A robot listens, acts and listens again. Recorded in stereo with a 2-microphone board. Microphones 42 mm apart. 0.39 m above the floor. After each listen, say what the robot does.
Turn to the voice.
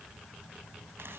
Keep listening.
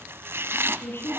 Turn 65° left.
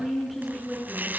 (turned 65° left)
Found it: a woman speaking, straight ahead, over 4 m away.